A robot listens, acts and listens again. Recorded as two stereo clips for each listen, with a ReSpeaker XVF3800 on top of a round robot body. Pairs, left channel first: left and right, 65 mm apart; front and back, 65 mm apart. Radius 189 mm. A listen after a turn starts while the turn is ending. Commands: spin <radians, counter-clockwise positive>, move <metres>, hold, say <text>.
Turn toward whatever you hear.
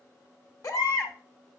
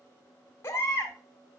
spin 0.96
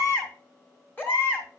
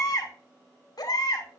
spin 0.52
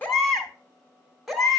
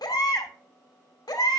say Facing the baby crying.